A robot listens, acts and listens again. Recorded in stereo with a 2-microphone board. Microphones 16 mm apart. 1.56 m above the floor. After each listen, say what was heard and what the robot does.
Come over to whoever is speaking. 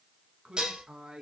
The man speaking: about 55° right or 125° right. Turn 55° right.
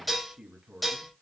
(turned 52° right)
So it is at 70° right. Turn 70° right.
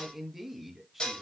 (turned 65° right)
The man speaking is now 10° right. Turn 10° right.
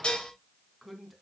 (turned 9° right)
Drive 1.0 m forward.
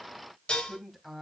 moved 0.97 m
Drive 1.0 m forward.
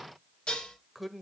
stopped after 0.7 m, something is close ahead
I am next to the man speaking.